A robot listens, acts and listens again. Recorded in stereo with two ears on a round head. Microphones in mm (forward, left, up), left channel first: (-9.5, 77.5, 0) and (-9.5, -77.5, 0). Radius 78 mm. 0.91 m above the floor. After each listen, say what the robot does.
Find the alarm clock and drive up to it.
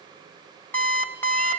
Turn 30° left.
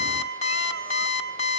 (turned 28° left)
Turn 140° left.
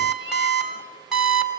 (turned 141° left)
Drive 1.0 m forward.
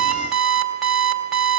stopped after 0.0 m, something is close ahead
Blocked. The alarm clock is further on, straight ahead.